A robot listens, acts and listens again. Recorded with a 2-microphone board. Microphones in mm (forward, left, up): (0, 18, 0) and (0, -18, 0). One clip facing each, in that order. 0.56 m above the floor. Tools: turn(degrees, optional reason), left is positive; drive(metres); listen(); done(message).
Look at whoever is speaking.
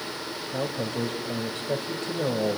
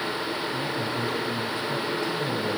turn(degrees=65, reason="The man speaking: about 65° left or 115° left.")
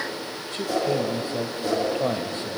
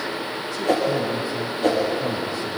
turn(degrees=45, reason="So it is at 45° left.")
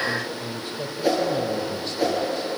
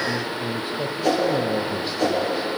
turn(degrees=-15, reason="The man speaking is now 15° right.")
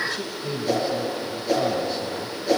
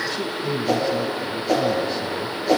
done("Found it: a man speaking, straight ahead, 2 to 4 m away.")